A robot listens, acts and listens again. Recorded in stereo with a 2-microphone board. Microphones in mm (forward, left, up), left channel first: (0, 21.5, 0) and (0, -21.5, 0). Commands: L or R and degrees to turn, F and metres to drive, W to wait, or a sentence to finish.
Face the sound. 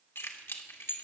L90
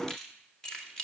L15
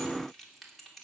Facing the keys jangling, 2 to 4 m away.